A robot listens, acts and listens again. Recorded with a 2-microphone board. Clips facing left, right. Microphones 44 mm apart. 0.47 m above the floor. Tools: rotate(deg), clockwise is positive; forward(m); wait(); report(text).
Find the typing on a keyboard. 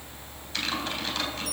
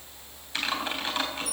rotate(20)
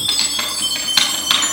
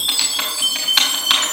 report("Found it: typing on a keyboard, straight ahead.")